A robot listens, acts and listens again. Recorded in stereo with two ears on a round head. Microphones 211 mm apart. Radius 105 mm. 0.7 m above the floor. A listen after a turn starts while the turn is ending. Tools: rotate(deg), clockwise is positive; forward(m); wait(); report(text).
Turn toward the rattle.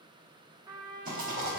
rotate(40)
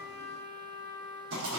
rotate(95)
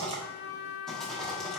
report("Facing the rattle, 1 to 2 m away.")